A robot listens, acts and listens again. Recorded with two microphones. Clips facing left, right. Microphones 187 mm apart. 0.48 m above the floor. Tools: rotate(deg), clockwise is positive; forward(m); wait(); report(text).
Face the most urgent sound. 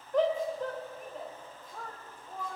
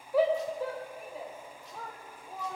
rotate(30)
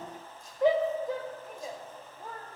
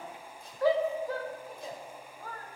rotate(-25)
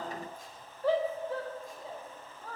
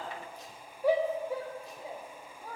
rotate(15)
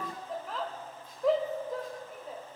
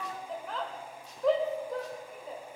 report("Found it: a shout, straight ahead, 1 to 2 m away.")